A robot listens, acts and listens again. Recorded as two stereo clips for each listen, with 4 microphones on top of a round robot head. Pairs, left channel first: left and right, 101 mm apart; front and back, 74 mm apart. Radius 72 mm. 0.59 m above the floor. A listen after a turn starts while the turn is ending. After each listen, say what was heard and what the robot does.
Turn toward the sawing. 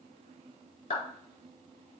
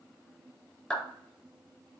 Keep listening.
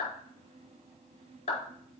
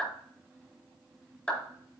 Keep listening.
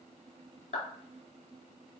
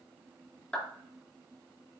I can't make out sawing to turn to.